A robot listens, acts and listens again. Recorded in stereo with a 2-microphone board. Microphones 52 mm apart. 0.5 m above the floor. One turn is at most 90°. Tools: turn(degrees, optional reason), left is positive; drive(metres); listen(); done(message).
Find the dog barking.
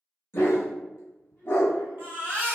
turn(degrees=55, reason="The dog barking: about 55° left or 125° left.")
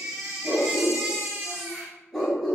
done("Facing the dog barking, 1 to 2 m away.")